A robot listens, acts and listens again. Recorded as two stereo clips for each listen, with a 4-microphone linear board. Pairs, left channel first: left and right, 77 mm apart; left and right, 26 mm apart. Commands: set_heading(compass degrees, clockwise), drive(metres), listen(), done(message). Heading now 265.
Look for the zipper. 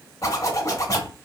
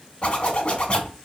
set_heading(225)
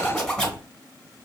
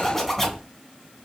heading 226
done("Found it: a zipper, straight ahead.")